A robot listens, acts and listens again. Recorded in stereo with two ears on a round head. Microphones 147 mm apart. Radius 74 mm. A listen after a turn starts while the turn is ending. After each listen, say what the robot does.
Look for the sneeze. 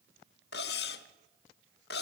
Keep listening.
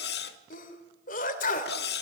Turn 55° left.
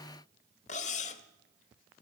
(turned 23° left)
Keep listening.
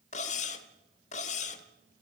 I heard a sneeze, but can't make it out now. It was about 30° left or 105° left.